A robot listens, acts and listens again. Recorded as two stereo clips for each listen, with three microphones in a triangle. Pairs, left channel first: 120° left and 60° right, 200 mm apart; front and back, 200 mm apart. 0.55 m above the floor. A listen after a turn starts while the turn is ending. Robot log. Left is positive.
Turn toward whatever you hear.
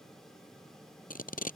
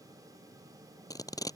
note: The tape being pulled: 75° left.
cmd yaw +75
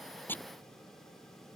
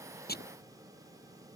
cmd idle
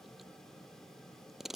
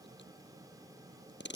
note: The tape being pulled is now 30° left.
cmd yaw +30
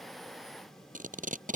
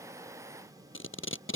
note: The tape being pulled is now 10° right.
cmd yaw -10
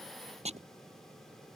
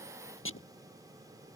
end: Found it: tape being pulled, straight ahead.